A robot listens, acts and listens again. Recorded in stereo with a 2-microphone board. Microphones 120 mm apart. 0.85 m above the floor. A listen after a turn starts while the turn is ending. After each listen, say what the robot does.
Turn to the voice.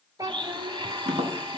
Turn 30° right.
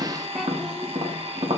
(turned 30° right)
Keep listening.
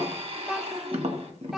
Found it: a child speaking, straight ahead.